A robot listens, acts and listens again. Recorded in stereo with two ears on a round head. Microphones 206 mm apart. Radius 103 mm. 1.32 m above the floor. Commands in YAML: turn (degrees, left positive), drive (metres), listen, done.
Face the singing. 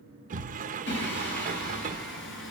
turn: 55
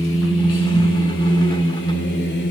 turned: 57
turn: 50
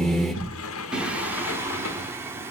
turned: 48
turn: -10
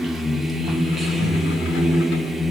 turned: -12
done: "Found it: singing, straight ahead, 1 to 2 m away."